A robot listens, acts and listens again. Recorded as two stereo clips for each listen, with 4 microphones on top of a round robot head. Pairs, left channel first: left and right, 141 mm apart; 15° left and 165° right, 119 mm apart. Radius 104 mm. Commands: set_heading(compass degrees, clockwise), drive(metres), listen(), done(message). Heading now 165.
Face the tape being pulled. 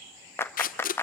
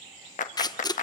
set_heading(95)
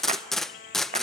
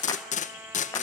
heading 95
done("Facing the tape being pulled, under 1 m away.")